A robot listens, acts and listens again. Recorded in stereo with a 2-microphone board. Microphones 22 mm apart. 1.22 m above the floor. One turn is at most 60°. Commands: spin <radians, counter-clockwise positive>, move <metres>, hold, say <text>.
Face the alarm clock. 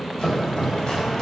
hold
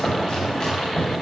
hold
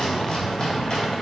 say I can't make out an alarm clock, only chopping.